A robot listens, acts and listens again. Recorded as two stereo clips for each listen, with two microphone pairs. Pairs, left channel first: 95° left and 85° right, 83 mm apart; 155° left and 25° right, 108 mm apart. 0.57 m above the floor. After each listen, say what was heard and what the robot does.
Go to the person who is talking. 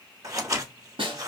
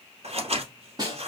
Keep listening.
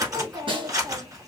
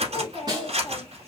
The child speaking: 110° right. Turn 110° right.
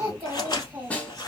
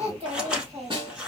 The child speaking is now 15° right. Turn 15° right.
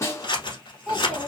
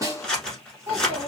Drive 1.0 m forward.
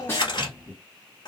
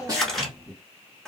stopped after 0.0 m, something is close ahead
Blocked. The child speaking is further on, straight ahead.